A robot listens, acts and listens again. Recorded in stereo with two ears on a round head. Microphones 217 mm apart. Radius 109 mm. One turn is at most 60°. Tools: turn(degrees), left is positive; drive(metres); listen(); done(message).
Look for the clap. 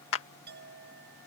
turn(degrees=55)
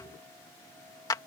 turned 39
turn(degrees=15)
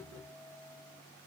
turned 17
listen()
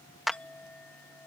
done("Facing the clap.")